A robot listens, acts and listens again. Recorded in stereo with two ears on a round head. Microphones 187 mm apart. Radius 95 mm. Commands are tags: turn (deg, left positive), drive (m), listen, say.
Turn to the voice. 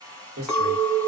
<turn deg="-75"/>
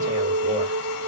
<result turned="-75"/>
<listen/>
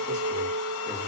<listen/>
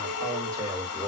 <turn deg="-20"/>
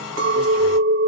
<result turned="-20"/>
<listen/>
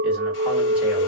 <listen/>
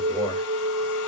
<say>I heard a man speaking from this way, but can't make it out now.</say>